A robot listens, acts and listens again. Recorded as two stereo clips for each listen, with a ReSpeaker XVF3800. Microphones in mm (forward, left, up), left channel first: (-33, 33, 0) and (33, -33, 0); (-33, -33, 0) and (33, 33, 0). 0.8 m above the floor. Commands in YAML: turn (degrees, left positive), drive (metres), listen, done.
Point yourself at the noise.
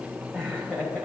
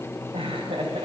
turn: 55
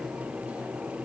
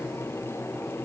listen: true
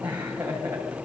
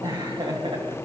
turn: 25
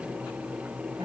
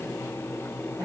listen: true
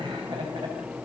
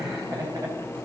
listen: true
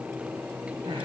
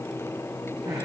done: "Facing where the laughter came from. I can't hear it now."